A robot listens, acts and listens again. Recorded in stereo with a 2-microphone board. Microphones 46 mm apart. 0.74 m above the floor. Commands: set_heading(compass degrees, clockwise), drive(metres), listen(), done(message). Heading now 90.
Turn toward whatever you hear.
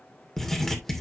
set_heading(60)
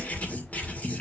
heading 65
set_heading(280)
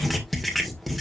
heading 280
done("Facing the writing, 2 to 4 m away.")